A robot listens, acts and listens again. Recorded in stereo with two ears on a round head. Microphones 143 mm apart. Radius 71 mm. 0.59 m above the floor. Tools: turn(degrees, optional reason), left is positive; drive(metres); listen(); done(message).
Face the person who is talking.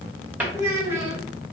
turn(degrees=-15, reason="The child speaking: about 15° right or 165° right.")
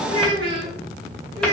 turn(degrees=-150, reason="So it is at 150° right.")
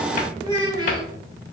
turn(degrees=-25, reason="The child speaking is now 25° right.")
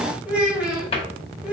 turn(degrees=-10, reason="The child speaking is now 10° right.")
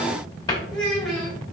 done("Facing the child speaking, 1 to 2 m away.")